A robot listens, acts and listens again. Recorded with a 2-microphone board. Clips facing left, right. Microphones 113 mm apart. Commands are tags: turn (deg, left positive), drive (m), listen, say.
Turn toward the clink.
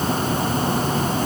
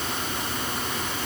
<listen/>
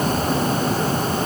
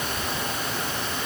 <listen/>
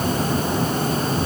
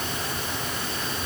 <say>I can't make out a clink to turn to.</say>